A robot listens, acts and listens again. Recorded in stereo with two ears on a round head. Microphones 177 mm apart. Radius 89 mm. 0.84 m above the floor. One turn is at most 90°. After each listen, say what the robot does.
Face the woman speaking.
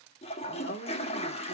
Turn 50° left.
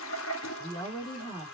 Turn 25° left.
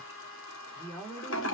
Turn 10° left.
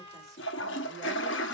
Keep listening.
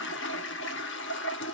Keep listening.
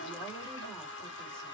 Facing where the woman speaking came from. I can't hear it now.